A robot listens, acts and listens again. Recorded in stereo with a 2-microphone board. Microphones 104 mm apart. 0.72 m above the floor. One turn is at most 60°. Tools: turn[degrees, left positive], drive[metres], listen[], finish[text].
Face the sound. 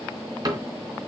Thought: The cupboard door: about 35° right or 145° right.
Action: turn[-35]
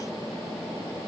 Action: listen[]
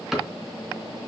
Action: finish[Found it: a cupboard door, straight ahead, 2 to 4 m away.]